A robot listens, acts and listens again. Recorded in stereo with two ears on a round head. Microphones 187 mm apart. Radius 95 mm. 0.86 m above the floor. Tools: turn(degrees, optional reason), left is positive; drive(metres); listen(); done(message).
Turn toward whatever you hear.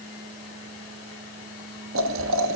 turn(degrees=-90)
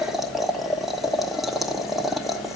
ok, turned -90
done("Facing the boiling.")